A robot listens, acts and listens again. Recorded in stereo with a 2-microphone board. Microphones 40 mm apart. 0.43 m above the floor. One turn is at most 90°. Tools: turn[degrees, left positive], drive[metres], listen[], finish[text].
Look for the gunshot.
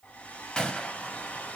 Thought: The gunshot: about 25° left or 155° left.
Action: turn[25]
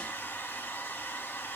Action: listen[]
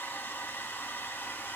Action: finish[I heard a gunshot, but can't make it out now. It was about straight ahead or 130° left.]